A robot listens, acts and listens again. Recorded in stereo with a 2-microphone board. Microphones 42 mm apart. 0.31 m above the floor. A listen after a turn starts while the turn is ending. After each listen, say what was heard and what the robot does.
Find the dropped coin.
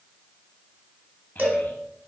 Keep listening.
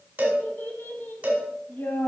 Keep listening.
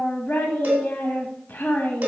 I can't make out a dropped coin, only a child speaking and a cowbell.